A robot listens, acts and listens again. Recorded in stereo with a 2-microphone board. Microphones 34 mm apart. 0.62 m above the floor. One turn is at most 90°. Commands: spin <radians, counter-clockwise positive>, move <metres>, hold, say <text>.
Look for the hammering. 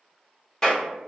hold
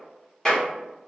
hold
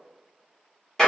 say I can't make out hammering to turn to.